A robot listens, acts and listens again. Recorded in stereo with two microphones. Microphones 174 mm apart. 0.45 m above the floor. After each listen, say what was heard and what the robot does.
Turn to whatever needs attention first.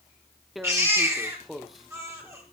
The baby crying: about 15° right or 165° right. Turn 15° right.
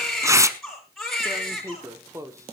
Facing the baby crying.